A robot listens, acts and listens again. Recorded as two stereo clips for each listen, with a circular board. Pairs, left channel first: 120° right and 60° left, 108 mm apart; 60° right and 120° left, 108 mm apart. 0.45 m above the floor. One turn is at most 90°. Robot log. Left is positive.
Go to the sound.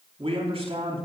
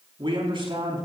note: The man speaking: 80° left.
cmd yaw +80
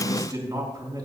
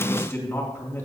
cmd fwd 1.0
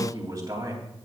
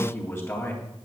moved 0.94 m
cmd fwd 1.0
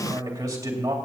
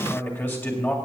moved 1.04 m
cmd fwd 1.0
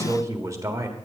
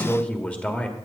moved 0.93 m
note: The man speaking is now 15° left.
cmd yaw +15
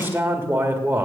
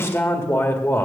cmd fwd 1.0
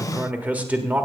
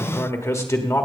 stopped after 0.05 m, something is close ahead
note: The man speaking is now 10° right.
cmd yaw -10
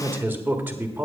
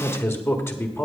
end: Arrived at the man speaking, straight ahead.